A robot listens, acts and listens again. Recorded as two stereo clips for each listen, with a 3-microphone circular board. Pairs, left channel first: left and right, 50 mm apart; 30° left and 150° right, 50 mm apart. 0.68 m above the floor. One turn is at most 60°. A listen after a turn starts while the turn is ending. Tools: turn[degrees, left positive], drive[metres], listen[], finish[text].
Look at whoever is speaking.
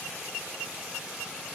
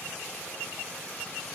Action: listen[]
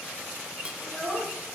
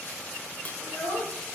Action: finish[Found it: a child speaking, straight ahead.]